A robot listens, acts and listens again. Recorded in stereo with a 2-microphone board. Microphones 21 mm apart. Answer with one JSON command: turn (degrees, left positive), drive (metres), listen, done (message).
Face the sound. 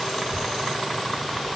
{"turn": 30}
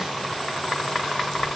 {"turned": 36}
{"listen": true}
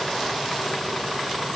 {"listen": true}
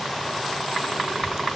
{"turn": -25}
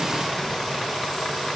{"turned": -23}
{"listen": true}
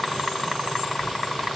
{"done": "Found it: a child speaking, straight ahead."}